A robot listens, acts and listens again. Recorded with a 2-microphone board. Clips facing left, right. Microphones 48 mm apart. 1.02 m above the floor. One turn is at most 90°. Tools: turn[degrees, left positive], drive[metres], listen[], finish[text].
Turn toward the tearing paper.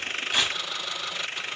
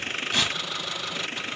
Action: turn[30]
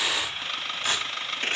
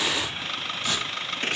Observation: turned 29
Thought: So it is at 140° left.
Action: turn[90]
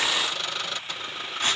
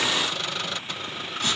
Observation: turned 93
Thought: The tearing paper is now 50° left.
Action: turn[50]
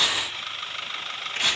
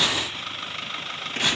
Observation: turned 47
Action: finish[Found it: tearing paper, straight ahead, 1 to 2 m away.]